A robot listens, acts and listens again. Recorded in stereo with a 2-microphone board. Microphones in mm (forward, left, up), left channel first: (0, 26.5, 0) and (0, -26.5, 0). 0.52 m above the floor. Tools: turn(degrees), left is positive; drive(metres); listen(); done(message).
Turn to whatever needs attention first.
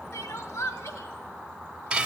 turn(degrees=75)
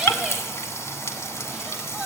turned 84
listen()
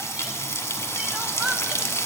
listen()
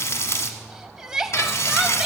turn(degrees=-10)
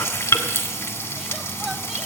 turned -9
listen()
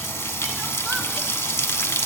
listen()
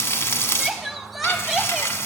done("Facing the crying.")